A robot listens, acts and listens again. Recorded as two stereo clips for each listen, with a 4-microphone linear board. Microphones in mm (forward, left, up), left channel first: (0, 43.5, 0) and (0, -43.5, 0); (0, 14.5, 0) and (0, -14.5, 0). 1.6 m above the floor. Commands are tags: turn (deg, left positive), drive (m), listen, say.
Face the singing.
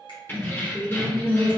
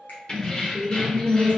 <turn deg="15"/>
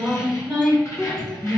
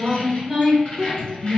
<say>Facing the singing.</say>